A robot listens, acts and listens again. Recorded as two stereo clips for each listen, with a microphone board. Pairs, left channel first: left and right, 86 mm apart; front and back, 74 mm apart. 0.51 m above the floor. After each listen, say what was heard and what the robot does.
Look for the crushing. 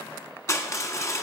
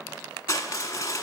The crushing: 40° left. Turn 40° left.
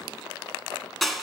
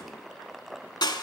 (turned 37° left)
Found it: crushing, straight ahead, under 1 m away.